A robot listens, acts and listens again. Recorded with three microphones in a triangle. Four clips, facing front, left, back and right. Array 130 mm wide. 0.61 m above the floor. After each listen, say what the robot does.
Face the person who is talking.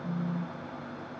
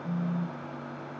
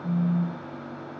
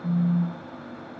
Keep listening.
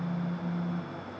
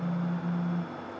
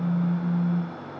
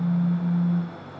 Keep listening.
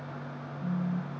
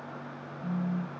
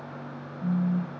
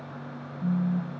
I can't make out anyone speaking, only a phone buzzing.